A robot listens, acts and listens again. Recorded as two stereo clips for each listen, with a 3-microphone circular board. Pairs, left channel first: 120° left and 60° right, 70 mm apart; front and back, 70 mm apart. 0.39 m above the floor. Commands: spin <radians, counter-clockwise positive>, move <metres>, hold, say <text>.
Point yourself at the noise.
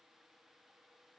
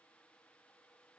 hold
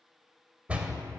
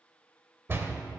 spin -2.27
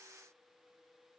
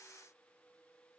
say I heard a door slam from this way, but can't make it out now.